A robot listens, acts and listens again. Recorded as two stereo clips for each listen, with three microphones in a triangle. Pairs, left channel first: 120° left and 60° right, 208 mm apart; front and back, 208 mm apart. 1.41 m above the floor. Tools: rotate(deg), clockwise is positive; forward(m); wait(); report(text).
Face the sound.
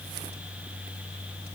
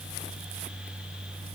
wait()
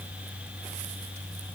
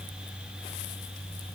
wait()
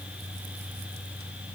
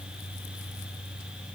report("I can't make out anything.")